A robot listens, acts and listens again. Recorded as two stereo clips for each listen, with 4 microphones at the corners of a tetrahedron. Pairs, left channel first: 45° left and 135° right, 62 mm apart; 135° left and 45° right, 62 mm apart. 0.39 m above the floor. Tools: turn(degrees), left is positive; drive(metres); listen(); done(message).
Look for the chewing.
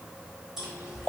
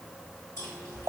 turn(degrees=145)
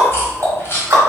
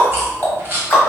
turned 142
done("Found it: chewing, straight ahead, 1 to 2 m away.")